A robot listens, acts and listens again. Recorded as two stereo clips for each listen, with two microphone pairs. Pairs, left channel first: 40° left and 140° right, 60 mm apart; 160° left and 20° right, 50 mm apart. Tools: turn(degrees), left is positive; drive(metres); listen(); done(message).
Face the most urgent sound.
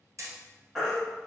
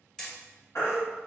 turn(degrees=135)
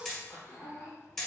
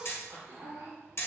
listen()
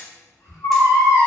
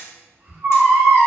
turn(degrees=15)
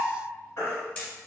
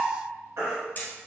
done("Found it: a baby crying, straight ahead.")